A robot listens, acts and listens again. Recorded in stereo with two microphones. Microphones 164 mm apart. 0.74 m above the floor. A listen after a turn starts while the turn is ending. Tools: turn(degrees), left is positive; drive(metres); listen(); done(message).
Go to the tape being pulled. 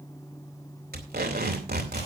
turn(degrees=-70)
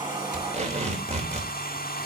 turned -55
turn(degrees=-45)
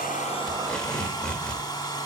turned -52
drive(metres=1.0)
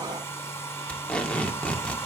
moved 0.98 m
drive(metres=1.0)
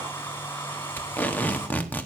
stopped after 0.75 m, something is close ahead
turn(degrees=10)
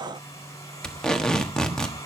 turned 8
done("Arrived at the tape being pulled, straight ahead.")